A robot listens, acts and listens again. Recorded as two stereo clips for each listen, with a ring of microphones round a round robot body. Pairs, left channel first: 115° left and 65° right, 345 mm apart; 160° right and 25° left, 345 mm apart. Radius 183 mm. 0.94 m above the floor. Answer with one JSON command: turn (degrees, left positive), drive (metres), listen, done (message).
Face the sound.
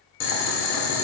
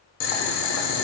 {"turn": 160}
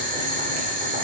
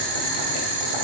{"done": "Found it: boiling, straight ahead."}